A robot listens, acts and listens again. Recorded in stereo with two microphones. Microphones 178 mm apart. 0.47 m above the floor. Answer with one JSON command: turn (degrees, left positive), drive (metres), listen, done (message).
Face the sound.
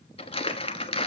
{"turn": 30}
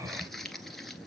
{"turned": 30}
{"done": "Facing the crumpling."}